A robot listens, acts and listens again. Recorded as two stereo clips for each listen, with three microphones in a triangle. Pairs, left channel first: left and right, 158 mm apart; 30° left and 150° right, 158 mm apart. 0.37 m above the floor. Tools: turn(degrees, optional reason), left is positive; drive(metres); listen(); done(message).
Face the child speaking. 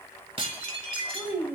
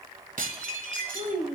turn(degrees=-165, reason="The child speaking: 165° right.")
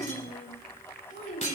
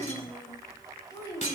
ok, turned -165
turn(degrees=95, reason="The child speaking is now 95° left.")
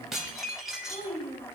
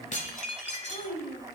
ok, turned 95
turn(degrees=50, reason="The child speaking is now 50° left.")
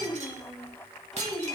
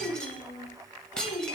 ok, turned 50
done("Facing the child speaking, 1 to 2 m away.")